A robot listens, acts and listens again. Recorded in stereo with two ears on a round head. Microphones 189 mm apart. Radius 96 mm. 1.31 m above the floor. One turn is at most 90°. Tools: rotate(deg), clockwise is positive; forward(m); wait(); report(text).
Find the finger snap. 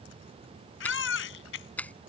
rotate(-30)
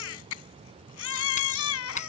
rotate(-90)
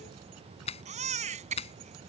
rotate(-30)
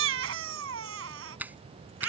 rotate(10)
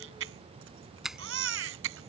report("Found it: a finger snap, straight ahead.")